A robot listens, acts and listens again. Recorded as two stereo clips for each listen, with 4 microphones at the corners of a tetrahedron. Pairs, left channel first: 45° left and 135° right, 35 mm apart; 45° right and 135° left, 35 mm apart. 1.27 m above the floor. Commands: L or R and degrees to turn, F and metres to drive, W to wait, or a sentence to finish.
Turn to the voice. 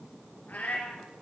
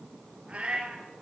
W
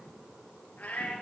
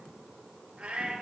W
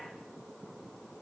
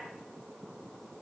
I can't make out anyone speaking, only a cat meowing.